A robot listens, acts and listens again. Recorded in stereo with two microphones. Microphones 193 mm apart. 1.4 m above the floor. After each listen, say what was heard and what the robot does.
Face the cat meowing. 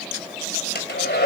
Keep listening.
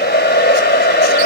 Keep listening.
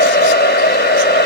I can't make out a cat meowing, only a hair dryer.